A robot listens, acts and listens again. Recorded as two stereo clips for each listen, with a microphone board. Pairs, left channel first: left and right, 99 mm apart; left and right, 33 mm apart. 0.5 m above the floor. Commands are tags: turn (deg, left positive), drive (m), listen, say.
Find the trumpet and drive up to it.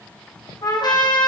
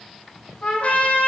<turn deg="45"/>
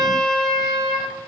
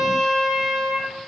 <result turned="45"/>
<drive m="1.0"/>
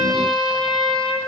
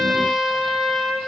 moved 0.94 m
<drive m="1.0"/>
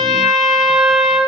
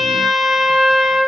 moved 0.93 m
<drive m="1.0"/>
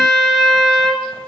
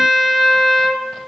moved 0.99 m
<drive m="1.0"/>
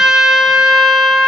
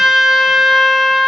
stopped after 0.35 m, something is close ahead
<say>Arrived at the trumpet, straight ahead.</say>